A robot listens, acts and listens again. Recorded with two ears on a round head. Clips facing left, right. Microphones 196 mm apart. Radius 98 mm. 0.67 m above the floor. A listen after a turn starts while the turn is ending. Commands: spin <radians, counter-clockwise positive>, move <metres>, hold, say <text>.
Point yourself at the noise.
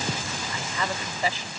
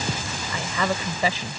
spin -1.22
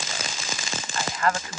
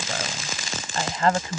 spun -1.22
spin -0.44
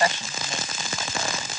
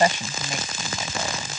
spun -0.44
hold
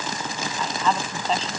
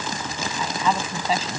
say Facing the woman speaking.